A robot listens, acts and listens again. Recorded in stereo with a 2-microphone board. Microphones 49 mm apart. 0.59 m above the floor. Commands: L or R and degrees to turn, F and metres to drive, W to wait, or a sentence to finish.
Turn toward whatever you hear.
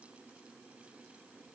W
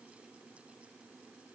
W
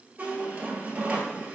R30
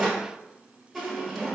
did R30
Facing the squeak, 1 to 2 m away.